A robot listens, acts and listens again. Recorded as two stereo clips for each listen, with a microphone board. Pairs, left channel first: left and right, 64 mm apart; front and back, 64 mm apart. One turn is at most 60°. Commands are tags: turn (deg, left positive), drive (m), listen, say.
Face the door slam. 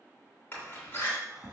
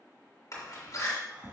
<turn deg="30"/>
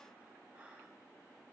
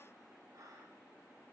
<say>Facing where the door slam came from. I can't hear it now.</say>